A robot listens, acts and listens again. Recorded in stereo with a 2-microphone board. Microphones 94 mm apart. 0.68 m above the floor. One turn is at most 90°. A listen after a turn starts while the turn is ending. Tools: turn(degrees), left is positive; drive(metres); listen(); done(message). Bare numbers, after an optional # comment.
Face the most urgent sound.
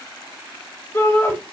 # The shout: about 25° left or 155° left.
turn(25)
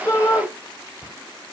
# So it is at 130° left.
turn(90)
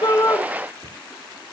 # Nothing new. It was at 40° left.
turn(40)
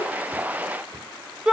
# The shout is now 10° right.
turn(-10)
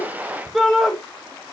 done("Found it: a shout, straight ahead.")